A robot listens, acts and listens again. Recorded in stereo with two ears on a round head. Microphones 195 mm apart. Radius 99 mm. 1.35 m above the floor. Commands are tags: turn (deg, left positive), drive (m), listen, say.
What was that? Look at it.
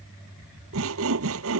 <turn deg="-75"/>
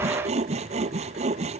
<turn deg="-30"/>
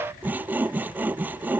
<turn deg="-10"/>
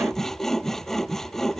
<say>Found it: sawing, straight ahead.</say>